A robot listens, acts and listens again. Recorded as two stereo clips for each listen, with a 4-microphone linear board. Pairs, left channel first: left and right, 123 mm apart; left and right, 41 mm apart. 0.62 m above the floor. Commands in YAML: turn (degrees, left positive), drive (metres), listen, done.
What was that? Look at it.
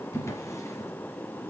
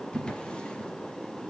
turn: 25
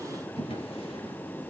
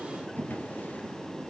turn: 130
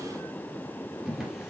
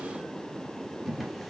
done: "Facing the drawer, 2 to 4 m away."